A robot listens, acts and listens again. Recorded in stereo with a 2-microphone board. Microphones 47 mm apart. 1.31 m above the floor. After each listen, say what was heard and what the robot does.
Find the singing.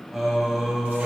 Turn 30° left.
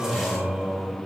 Turn 30° right.
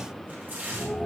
So it is at 30° left. Turn 30° left.
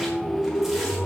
The singing is now 10° left. Turn 10° left.
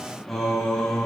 The singing is now 10° left. Turn 10° left.
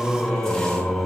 The singing is now 10° left. Turn 10° left.
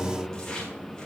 Found it: singing, straight ahead, 2 to 4 m away.